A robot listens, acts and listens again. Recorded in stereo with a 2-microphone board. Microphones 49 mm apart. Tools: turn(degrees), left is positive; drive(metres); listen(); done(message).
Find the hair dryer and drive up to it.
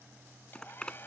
turn(degrees=45)
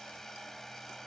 drive(metres=1.0)
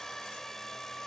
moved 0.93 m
turn(degrees=10)
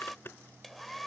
drive(metres=1.0)
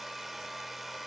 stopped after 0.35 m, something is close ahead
done("I am next to the hair dryer.")